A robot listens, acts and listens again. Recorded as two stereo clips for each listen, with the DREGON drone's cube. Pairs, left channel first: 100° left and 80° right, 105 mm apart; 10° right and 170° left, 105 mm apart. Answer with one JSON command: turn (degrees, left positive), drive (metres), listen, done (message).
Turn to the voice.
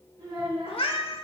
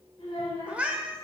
{"turn": -45}
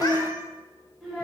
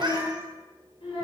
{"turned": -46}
{"done": "Found it: a child speaking, straight ahead, 2 to 4 m away."}